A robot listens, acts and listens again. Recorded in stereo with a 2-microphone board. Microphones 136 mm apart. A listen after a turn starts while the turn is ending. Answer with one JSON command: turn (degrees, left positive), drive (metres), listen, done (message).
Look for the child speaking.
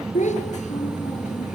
{"turn": 60}
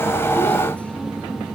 {"listen": true}
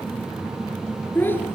{"turn": 15}
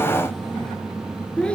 {"done": "Found it: a child speaking, straight ahead."}